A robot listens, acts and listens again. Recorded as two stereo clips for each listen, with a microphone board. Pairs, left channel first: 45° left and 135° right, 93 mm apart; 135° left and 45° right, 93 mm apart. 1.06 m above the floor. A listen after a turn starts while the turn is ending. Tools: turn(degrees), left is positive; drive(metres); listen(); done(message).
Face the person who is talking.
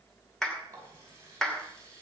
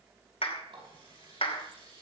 listen()
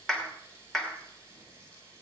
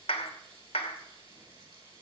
listen()
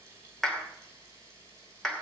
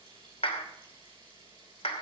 done("I can't make out anyone speaking to turn to.")